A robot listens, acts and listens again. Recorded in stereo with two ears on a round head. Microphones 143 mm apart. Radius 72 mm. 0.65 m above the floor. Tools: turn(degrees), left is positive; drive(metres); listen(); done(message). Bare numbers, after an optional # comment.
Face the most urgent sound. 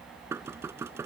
listen()
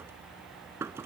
listen()
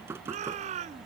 # The shout: about 45° right or 135° right.
turn(-45)
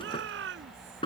# So it is at 90° right.
turn(-90)
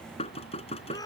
# The shout is now 20° left.
turn(20)
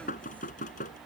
listen()
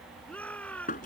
# The shout is now 10° left.
turn(10)
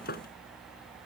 listen()
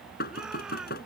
listen()
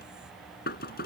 done("Facing where the shout came from. I can't hear it now.")